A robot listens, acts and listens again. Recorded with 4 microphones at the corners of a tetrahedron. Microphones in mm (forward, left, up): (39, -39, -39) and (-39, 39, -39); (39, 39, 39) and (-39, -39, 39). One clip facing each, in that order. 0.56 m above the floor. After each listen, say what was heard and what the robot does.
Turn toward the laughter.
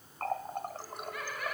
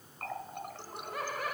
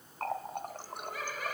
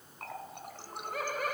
The laughter: 170° right. Turn 170° right.
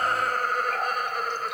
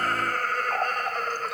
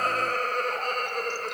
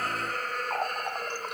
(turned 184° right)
The laughter is now 35° left. Turn 35° left.
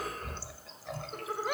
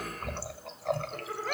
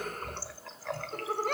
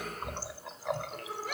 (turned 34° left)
The laughter is now 25° left. Turn 25° left.
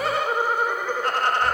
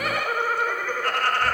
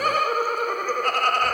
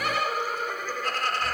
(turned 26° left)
The laughter is now 20° left. Turn 20° left.
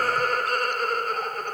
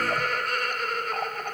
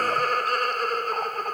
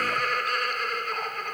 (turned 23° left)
Facing the laughter.